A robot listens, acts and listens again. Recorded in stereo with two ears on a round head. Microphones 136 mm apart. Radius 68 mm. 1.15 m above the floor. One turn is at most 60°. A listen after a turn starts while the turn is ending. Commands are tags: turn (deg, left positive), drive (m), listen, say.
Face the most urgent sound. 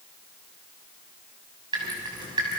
<listen/>
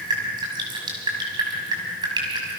<listen/>
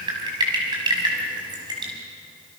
<say>I can't make out anything urgent, only dripping.</say>